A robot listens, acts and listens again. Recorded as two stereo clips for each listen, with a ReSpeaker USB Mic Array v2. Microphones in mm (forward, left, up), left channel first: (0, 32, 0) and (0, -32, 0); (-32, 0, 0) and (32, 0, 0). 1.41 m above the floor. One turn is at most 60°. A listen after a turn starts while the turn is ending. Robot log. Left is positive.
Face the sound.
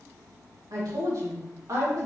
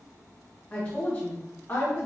note: The woman speaking: 125° right.
cmd yaw -60
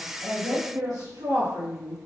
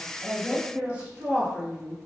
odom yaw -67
note: The woman speaking is now 80° right.
cmd yaw -60
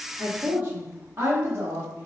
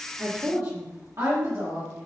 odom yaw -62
note: The woman speaking is now 35° right.
cmd yaw -35
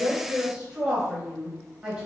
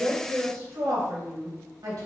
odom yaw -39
end: Found it: a woman speaking, straight ahead.